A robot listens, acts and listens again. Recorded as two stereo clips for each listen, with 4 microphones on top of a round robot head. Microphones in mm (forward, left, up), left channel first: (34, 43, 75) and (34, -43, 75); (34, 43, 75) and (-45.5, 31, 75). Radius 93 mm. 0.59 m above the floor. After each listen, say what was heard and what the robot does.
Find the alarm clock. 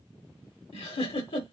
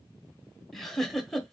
Keep listening.
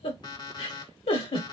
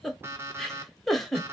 The alarm clock: 130° left. Turn 130° left.
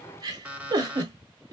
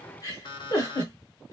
The alarm clock is now 15° right. Turn 15° right.
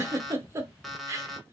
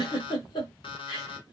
Found it: an alarm clock, straight ahead.